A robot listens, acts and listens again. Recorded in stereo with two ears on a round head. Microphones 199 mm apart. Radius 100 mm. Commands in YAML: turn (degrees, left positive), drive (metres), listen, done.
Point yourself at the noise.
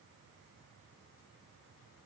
listen: true
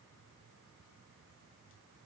listen: true
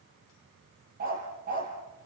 turn: -40
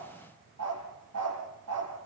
turn: -100
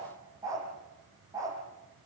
turn: -15
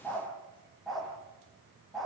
done: "Facing the dog barking."